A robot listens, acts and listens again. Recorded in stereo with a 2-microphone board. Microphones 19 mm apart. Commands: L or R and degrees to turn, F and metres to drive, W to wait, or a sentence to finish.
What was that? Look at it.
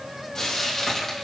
L30
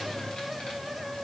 W
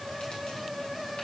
W
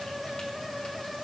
I heard frying, but can't make it out now. It was about straight ahead or 120° left.